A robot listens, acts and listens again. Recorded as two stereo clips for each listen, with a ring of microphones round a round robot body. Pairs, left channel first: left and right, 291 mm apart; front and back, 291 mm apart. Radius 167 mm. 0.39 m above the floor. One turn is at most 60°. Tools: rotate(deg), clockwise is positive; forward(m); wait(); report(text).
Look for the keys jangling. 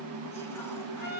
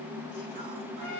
wait()
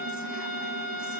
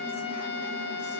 wait()
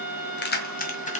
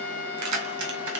rotate(-60)
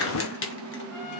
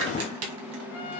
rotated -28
rotate(-60)
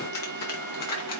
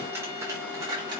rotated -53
rotate(-60)
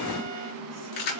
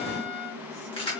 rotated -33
rotate(-60)
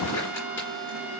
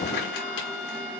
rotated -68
wait()
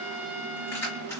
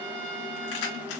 report("Found it: keys jangling, straight ahead, 2 to 4 m away.")